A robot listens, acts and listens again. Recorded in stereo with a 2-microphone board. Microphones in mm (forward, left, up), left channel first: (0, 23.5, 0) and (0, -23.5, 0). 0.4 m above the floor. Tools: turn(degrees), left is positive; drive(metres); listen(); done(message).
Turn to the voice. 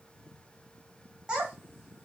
turn(degrees=-15)
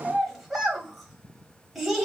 done("Facing the child speaking.")